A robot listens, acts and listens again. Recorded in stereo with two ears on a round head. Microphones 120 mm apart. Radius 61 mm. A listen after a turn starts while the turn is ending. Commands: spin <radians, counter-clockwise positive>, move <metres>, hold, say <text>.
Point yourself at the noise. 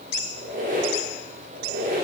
spin -1.22
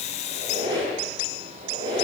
spin -0.52
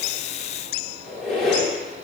say Found it: a squeak, straight ahead, under 1 m away.